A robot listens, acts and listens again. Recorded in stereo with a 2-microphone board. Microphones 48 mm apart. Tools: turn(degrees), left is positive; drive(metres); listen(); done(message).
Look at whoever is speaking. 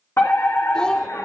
turn(degrees=15)
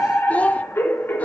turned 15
turn(degrees=150)
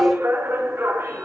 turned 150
listen()
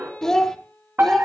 turn(degrees=10)
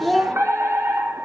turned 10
done("Facing the child speaking, 1 to 2 m away.")